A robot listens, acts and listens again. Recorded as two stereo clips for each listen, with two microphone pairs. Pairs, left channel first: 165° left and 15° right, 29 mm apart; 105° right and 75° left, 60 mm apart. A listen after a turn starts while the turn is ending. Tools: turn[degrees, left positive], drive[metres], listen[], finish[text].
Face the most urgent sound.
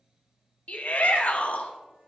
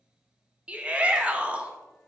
Thought: The shout: 140° left.
Action: turn[140]
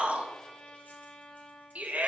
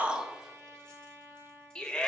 Thought: The shout is now 30° right.
Action: turn[-30]
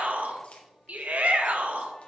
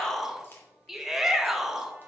Thought: The shout is now 10° right.
Action: turn[-10]
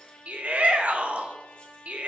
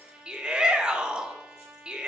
Action: finish[Facing the shout.]